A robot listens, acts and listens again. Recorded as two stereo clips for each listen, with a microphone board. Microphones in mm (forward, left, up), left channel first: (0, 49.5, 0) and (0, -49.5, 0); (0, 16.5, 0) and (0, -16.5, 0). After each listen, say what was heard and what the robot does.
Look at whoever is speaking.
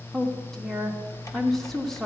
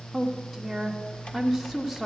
Turn 30° left.
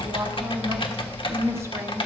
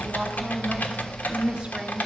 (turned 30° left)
So it is at 30° right. Turn 30° right.
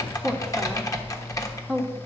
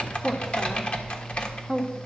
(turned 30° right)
Facing the woman speaking.